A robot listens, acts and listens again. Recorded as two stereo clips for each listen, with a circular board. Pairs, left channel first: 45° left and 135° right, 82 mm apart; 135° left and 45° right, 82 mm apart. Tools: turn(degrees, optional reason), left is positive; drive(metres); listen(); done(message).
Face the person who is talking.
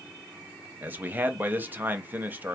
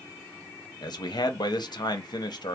turn(degrees=160, reason="The man speaking: 160° left.")
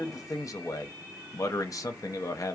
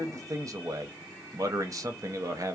done("Facing the man speaking.")